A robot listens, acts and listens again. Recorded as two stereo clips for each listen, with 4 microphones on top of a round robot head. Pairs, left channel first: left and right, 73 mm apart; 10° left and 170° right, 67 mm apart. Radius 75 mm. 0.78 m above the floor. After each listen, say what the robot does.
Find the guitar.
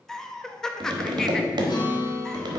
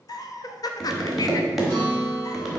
Turn 70° left.
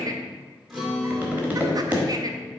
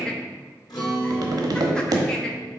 Facing the guitar, 2 to 4 m away.